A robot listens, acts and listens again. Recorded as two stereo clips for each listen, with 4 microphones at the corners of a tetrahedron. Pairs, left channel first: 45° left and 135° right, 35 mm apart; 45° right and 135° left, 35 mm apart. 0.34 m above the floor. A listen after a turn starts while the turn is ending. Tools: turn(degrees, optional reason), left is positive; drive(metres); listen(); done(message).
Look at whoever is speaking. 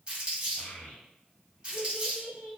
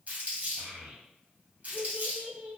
turn(degrees=95, reason="The child speaking: 95° left.")
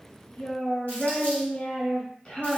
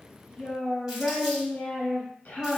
turn(degrees=-10, reason="The child speaking is now 10° right.")
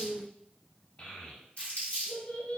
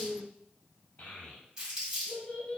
done("Found it: a child speaking, straight ahead, under 1 m away.")